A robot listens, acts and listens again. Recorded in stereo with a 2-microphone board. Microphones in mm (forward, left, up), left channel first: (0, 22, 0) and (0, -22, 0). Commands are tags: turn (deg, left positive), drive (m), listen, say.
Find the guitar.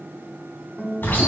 <turn deg="30"/>
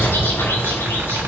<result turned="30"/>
<listen/>
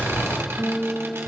<turn deg="150"/>
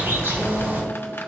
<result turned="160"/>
<turn deg="-10"/>
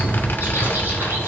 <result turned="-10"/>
<listen/>
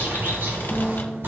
<say>Facing where the guitar came from. I can't hear it now.</say>